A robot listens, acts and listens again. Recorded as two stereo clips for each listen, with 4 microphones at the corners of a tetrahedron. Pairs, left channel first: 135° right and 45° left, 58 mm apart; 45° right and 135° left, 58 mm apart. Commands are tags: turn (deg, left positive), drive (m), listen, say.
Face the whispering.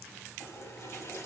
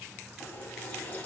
<listen/>
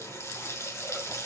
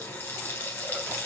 <listen/>
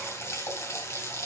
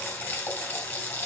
<say>I can't make out whispering to turn to.</say>